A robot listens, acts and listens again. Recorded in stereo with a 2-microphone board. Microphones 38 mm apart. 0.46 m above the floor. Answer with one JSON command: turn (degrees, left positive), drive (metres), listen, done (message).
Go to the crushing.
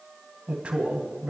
{"listen": true}
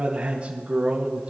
{"listen": true}
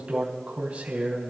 {"done": "I can't make out crushing, only a man speaking."}